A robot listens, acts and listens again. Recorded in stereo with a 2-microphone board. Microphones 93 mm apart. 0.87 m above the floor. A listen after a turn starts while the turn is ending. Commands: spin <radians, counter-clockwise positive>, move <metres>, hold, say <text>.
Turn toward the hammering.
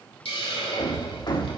spin 0.87
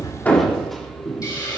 say Facing the hammering.